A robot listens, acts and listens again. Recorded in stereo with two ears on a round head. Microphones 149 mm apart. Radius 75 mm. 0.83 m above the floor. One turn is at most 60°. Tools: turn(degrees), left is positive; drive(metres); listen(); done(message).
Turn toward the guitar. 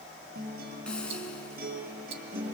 turn(degrees=-60)
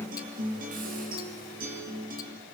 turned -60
turn(degrees=-55)
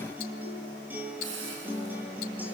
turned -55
turn(degrees=-10)
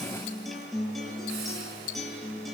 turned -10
done("Found it: a guitar, straight ahead, over 4 m away.")